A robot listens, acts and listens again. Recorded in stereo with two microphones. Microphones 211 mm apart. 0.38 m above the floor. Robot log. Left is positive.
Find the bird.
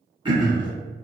cmd idle
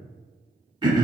cmd idle
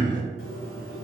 cmd yaw +90
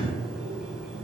end: Found it: a bird, straight ahead, under 1 m away.